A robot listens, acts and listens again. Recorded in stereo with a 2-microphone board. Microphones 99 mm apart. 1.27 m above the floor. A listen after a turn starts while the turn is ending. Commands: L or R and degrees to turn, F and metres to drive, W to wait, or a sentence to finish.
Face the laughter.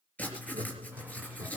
R90
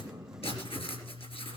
W
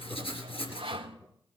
L20
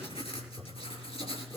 L15
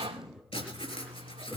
Facing the laughter, 2 to 4 m away.